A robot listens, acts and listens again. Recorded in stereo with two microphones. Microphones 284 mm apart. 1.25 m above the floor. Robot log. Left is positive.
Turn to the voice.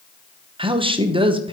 note: The woman speaking: about 15° right or 165° right.
cmd yaw -15
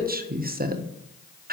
note: So it is at 150° right.
cmd yaw -150
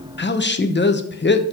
note: The woman speaking is now 35° left.
cmd yaw +35
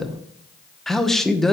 end: Facing the woman speaking, under 1 m away.